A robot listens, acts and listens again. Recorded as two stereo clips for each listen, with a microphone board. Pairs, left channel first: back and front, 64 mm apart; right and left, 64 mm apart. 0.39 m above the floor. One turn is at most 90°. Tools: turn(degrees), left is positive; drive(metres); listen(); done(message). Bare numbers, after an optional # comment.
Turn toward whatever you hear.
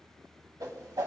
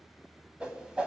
# The whoosh: 20° left.
turn(20)
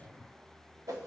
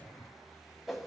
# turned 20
done("Found it: a whoosh, straight ahead.")